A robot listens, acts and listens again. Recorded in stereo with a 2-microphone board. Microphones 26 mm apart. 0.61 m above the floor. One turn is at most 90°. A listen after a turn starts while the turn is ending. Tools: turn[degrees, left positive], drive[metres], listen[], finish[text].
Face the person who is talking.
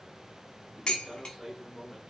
Thought: The man speaking: about 20° right or 160° right.
Action: turn[-20]
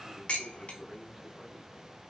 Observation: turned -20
Action: listen[]
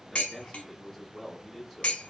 Action: finish[Found it: a man speaking, straight ahead, 1 to 2 m away.]